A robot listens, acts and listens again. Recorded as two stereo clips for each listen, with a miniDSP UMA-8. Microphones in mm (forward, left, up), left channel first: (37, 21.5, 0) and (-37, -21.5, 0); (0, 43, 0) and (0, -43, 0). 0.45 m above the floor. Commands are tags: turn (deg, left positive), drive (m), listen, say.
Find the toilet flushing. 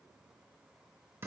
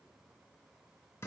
<listen/>
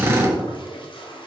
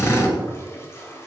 <turn deg="30"/>
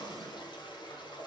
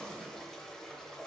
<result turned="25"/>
<say>Facing the toilet flushing, under 1 m away.</say>